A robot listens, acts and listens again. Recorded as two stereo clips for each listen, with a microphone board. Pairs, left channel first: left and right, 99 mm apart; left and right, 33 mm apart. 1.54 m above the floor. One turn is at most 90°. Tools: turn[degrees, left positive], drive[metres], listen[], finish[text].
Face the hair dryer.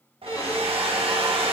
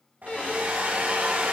Thought: The hair dryer: about 70° right or 110° right.
Action: turn[-70]
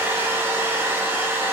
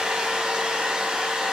Thought: So it is at 25° right.
Action: turn[-25]
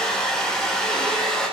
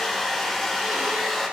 Action: finish[Found it: a hair dryer, straight ahead, 1 to 2 m away.]